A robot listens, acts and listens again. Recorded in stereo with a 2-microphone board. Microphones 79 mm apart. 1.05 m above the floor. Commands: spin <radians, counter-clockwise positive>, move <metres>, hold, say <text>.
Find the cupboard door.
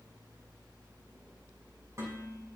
hold
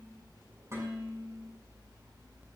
hold
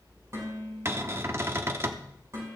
spin -0.61
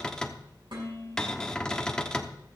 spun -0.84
spin 0.17
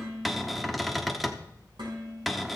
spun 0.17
say Facing the cupboard door.